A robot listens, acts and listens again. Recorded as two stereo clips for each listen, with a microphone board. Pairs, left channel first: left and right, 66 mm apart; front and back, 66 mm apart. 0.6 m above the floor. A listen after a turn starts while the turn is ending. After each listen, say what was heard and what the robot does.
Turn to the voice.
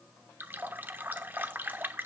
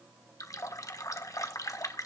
Keep listening.
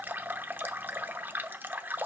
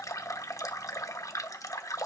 Keep listening.
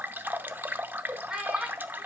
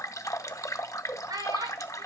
The child speaking: 165° right. Turn 165° right.
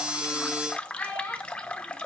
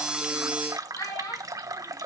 The child speaking is now 25° left. Turn 25° left.
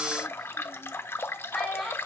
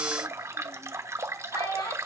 Facing the child speaking, over 4 m away.